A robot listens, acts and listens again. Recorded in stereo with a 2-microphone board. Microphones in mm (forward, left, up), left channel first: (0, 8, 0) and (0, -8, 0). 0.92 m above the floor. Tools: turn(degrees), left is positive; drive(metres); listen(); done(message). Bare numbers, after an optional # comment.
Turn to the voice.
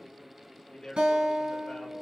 # The man speaking: about 65° left or 115° left.
turn(65)
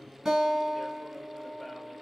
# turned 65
listen()
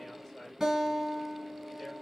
listen()
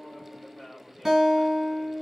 # So it is at 30° left.
turn(30)
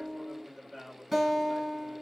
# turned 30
done("Found it: a man speaking, straight ahead.")